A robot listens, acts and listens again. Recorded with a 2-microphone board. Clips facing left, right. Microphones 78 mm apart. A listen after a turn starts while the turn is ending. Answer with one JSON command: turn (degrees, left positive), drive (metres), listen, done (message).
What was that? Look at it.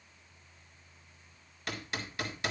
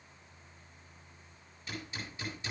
{"turn": 90}
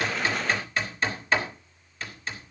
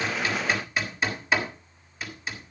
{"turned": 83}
{"done": "Found it: hammering, straight ahead, 2 to 4 m away."}